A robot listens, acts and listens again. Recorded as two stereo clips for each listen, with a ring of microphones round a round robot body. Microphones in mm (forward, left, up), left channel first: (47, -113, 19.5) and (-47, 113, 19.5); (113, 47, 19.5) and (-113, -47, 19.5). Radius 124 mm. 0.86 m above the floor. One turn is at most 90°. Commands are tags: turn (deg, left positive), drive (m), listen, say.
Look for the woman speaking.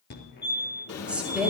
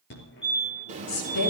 <turn deg="25"/>
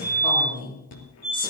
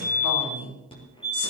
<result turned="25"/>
<say>Facing the woman speaking.</say>